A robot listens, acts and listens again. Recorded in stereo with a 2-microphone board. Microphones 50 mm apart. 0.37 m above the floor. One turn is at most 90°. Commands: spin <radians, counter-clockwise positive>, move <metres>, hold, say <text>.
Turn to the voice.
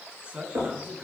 spin -0.44
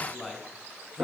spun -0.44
say Facing the man speaking.